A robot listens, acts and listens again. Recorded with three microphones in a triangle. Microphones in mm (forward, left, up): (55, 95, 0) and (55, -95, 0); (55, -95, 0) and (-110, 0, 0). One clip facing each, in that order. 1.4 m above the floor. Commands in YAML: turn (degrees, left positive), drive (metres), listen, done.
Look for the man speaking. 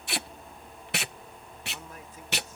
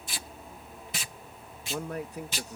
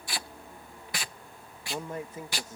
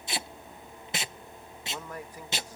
turn: -95
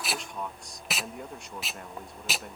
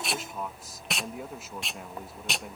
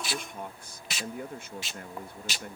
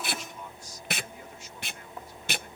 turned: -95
done: "Facing the man speaking."